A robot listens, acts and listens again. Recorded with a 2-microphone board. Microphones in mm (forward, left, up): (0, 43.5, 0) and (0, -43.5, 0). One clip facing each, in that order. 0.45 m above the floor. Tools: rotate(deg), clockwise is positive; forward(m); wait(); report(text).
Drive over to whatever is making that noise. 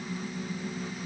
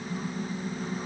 wait()
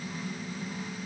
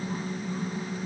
wait()
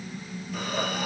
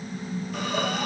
rotate(-30)
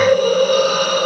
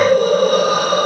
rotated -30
rotate(30)
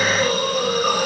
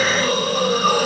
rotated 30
forward(1.0)
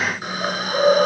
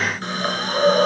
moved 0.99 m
forward(1.0)
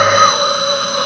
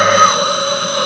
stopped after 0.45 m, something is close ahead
report("I am next to the hiss.")